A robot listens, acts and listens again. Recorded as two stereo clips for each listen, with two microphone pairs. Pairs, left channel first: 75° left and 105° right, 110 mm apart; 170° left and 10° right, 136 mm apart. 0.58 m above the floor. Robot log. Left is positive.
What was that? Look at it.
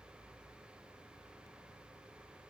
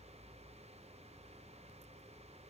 cmd idle
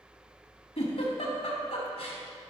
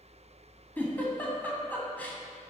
note: The giggle: 90° left.
cmd yaw +90
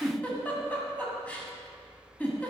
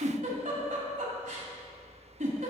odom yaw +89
end: Facing the giggle, 1 to 2 m away.